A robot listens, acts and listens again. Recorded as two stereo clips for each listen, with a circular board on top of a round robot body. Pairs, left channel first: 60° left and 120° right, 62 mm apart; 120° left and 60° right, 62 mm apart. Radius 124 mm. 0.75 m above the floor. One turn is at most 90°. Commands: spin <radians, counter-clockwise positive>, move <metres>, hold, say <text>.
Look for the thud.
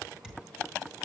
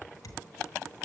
spin 1.57
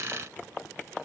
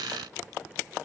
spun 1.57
spin 1.22
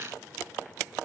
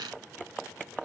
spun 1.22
say Facing where the thud came from. I can't hear it now.